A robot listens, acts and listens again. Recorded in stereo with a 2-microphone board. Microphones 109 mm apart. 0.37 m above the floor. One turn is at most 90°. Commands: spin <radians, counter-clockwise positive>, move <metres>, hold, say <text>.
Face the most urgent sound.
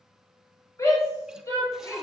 spin 0.52
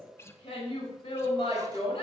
spin 1.57
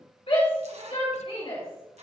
spin 1.05
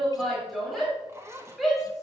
say Facing the shout, over 4 m away.